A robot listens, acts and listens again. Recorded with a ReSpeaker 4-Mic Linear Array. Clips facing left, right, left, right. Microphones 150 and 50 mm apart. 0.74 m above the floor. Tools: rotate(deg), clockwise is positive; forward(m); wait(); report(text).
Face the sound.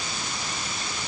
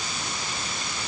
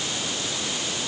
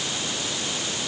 wait()
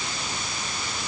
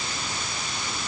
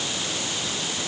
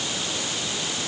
wait()
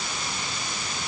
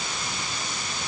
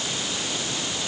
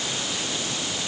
report("I can't make out anything to turn to.")